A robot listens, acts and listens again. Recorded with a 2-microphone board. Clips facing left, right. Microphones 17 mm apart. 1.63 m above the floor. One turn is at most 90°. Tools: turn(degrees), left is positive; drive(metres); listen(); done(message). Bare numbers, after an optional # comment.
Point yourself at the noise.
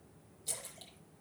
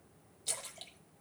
# The splash: about 30° right or 150° right.
turn(-30)
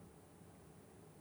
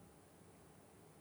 listen()
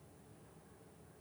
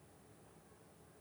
done("I heard a splash, but can't make it out now. It was about straight ahead or 120° right.")